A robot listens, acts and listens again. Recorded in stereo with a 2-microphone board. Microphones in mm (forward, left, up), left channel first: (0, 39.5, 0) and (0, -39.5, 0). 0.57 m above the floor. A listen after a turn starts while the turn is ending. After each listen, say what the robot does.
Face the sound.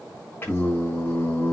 Turn 30° left.
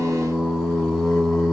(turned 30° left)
Found it: singing, straight ahead.